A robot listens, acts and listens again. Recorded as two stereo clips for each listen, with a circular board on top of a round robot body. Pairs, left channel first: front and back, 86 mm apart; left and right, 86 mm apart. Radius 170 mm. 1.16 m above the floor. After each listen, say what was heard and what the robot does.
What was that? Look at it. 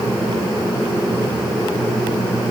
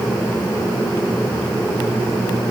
Keep listening.
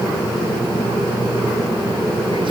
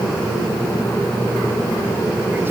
Keep listening.
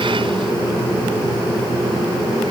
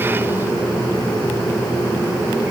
I can't make out anything.